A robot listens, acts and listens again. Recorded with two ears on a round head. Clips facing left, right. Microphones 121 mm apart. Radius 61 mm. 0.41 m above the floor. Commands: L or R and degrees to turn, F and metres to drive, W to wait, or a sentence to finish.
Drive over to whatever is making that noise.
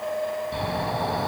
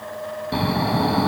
R70
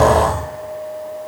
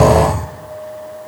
R10
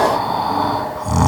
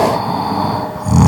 F1.0
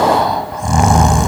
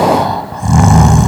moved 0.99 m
F1.0
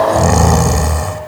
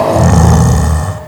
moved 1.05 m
L10
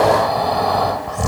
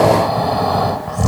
F1.0
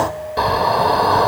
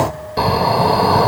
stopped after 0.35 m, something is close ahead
R10
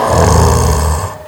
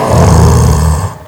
I am next to the snoring.